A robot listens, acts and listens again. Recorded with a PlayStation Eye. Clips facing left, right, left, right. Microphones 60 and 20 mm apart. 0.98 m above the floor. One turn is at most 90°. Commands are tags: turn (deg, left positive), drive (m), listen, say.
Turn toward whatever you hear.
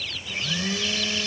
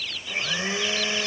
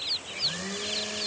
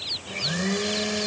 <turn deg="-25"/>
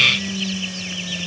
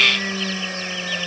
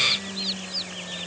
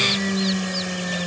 <turn deg="-90"/>
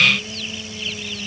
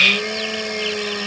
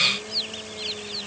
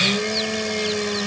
<turn deg="-70"/>
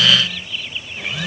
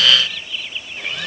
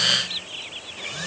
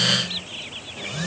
<say>Found it: a blender, straight ahead.</say>